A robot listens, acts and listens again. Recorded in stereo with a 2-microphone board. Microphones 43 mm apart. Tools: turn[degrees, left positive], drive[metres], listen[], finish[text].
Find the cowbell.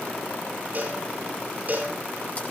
Thought: The cowbell: about 40° right or 140° right.
Action: turn[-40]
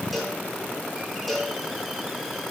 Action: finish[Found it: a cowbell, straight ahead.]